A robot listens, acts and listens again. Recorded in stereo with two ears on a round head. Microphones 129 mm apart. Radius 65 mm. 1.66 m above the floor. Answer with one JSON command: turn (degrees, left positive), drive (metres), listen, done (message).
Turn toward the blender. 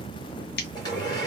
{"turn": 25}
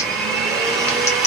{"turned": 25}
{"done": "Facing the blender, 1 to 2 m away."}